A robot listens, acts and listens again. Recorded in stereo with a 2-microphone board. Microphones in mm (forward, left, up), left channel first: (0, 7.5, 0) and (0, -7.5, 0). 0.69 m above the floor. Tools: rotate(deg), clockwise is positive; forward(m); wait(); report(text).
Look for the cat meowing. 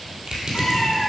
rotate(-60)
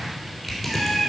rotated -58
report("Facing the cat meowing.")